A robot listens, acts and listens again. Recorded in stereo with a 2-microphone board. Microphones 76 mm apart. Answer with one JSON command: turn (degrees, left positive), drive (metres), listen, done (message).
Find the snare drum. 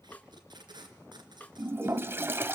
{"turn": 20}
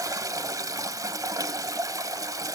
{"listen": true}
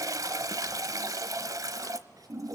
{"listen": true}
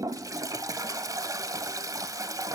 {"done": "I heard a snare drum, but can't make it out now. It was about straight ahead or 140° left."}